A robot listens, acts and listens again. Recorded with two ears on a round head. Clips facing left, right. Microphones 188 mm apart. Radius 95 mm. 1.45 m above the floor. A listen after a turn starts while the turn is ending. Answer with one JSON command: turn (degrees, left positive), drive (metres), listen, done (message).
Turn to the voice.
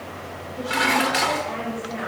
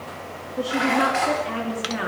{"turn": -90}
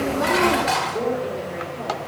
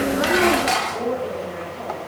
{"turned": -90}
{"done": "Found it: a woman speaking, straight ahead, over 4 m away."}